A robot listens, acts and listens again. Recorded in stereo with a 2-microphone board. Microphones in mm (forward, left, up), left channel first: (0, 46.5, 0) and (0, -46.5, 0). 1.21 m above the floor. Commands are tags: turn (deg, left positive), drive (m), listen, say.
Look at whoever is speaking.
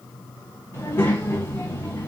<turn deg="25"/>
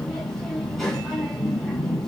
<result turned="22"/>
<say>Facing the child speaking.</say>